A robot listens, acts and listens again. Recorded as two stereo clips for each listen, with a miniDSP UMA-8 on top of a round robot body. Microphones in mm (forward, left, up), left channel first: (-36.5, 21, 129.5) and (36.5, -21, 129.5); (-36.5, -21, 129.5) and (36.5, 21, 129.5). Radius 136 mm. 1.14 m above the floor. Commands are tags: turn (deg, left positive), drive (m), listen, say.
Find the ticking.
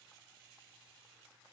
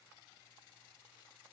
<listen/>
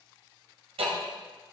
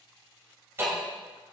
<turn deg="-35"/>
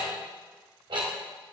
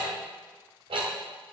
<say>Facing the ticking.</say>